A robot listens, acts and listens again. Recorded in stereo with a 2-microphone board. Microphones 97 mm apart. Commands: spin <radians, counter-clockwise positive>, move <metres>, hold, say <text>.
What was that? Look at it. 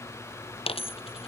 spin 1.57
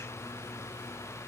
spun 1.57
say Facing where the dropped coin came from. I can't hear it now.